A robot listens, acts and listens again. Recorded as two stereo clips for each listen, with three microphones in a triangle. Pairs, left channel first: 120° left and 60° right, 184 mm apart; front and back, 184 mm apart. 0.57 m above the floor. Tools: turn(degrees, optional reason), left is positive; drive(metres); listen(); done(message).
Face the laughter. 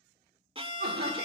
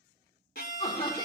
turn(degrees=-60, reason="The laughter: 60° right.")
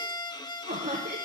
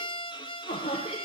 turn(degrees=-45, reason="The laughter is now 45° right.")
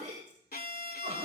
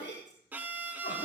turn(degrees=-20, reason="The laughter is now 20° right.")
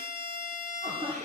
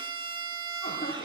done("Found it: laughter, straight ahead.")